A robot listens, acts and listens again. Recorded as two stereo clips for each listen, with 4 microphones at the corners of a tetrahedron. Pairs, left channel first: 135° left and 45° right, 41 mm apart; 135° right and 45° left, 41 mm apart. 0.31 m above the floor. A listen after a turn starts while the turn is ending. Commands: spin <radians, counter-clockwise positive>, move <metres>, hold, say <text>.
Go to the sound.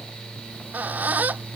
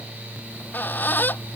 spin -1.66
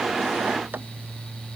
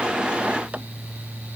hold
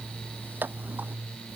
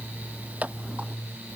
spin -0.17
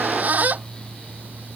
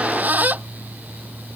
move 1.0
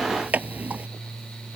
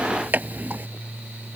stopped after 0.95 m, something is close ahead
say Arrived at the squeak, straight ahead.